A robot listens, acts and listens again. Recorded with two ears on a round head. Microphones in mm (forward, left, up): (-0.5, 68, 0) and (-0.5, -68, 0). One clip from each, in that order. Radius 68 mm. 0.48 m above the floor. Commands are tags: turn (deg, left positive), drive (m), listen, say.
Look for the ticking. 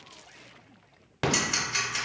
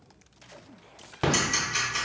<turn deg="20"/>
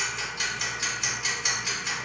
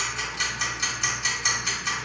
<say>Facing the ticking, 1 to 2 m away.</say>